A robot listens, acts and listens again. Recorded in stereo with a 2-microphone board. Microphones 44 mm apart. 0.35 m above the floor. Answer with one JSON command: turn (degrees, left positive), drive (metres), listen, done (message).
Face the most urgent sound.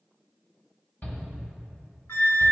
{"turn": 40}
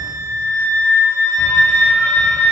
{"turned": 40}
{"listen": true}
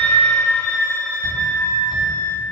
{"listen": true}
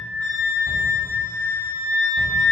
{"done": "I heard a shout, but can't make it out now. It was about straight ahead or 100° left."}